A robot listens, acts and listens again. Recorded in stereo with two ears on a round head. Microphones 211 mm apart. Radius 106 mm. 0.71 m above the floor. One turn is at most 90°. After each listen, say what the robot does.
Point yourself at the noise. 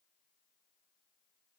Keep listening.
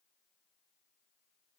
Keep listening.
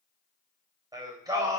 Turn 30° right.
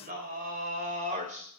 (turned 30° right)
Turn 90° right.
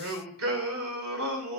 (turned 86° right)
Turn 60° right.
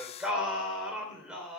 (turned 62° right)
Facing the singing, 2 to 4 m away.